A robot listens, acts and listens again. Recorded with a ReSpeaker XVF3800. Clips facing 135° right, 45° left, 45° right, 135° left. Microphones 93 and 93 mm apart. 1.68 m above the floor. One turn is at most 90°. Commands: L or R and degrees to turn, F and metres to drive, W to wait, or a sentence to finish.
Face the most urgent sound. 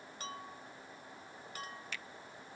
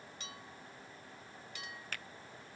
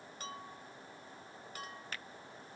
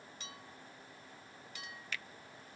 W
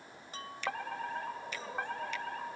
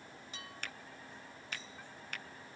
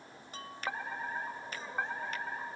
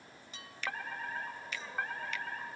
R90
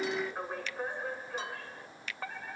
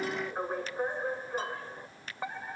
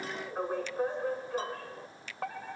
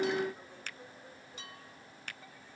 R30
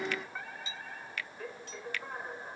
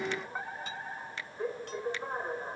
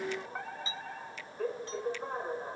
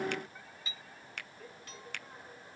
R20
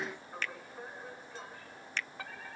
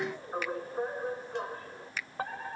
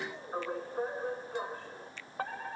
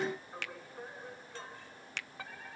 Facing the fire alarm.